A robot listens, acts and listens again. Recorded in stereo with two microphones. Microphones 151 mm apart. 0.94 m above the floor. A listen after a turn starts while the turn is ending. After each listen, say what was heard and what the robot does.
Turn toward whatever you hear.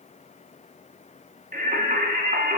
The singing: about 65° right or 115° right. Turn 65° right.
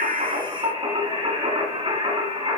So it is at 40° right. Turn 40° right.
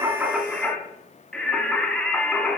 Facing the singing.